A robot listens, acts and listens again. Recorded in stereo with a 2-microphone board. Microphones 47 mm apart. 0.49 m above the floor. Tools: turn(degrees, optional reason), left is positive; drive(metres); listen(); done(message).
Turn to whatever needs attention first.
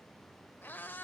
listen()
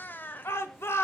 turn(degrees=65, reason="The shout: about 65° left or 115° left.")
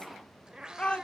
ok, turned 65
turn(degrees=25, reason="So it is at 25° left.")
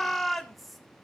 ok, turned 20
done("Facing the shout, 1 to 2 m away.")